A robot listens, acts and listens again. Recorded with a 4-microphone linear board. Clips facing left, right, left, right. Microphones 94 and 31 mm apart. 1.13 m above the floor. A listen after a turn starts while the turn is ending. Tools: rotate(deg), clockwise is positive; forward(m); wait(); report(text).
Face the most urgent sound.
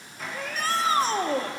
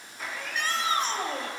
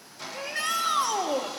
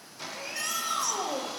rotate(-35)
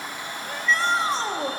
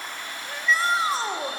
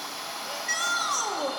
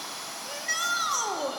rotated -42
report("Found it: a shout, straight ahead, under 1 m away.")